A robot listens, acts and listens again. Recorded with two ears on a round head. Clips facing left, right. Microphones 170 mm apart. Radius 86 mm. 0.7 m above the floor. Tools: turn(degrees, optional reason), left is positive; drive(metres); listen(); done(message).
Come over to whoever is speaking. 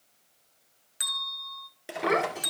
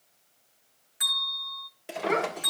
turn(degrees=90)
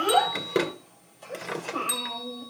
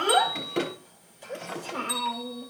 drive(metres=1.0)
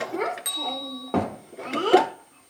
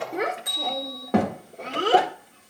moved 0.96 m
turn(degrees=-15, reason="The child speaking is now 15° right.")
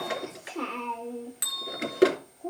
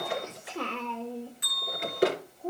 drive(metres=1.0)
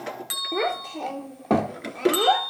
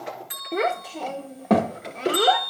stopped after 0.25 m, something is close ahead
done("I am next to the child speaking.")